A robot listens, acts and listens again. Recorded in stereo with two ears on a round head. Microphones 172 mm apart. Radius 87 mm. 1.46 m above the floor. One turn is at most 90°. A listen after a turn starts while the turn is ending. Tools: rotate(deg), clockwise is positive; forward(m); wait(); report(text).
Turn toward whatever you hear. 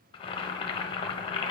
rotate(-30)
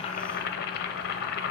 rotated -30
rotate(-90)
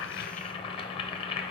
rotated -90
rotate(-30)
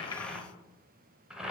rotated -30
report("Facing the boiling.")